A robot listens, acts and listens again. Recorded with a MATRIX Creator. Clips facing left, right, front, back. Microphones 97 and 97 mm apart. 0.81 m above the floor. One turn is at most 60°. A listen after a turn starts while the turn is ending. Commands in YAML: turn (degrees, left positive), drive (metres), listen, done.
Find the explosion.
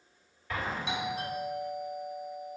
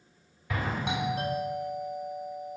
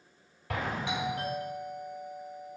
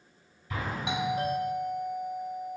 turn: -10
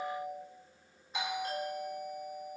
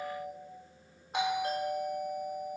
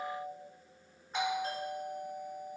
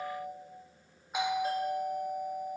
done: "Facing where the explosion came from. I can't hear it now."